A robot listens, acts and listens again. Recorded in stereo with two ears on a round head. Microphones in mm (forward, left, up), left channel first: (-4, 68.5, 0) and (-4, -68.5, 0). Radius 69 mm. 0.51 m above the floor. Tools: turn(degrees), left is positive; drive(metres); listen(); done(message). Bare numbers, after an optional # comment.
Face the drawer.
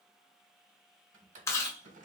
# The drawer: about 55° right or 125° right.
turn(-55)
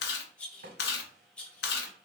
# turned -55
# So it is at 70° right.
turn(-70)
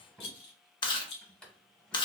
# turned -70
done("Facing the drawer, under 1 m away.")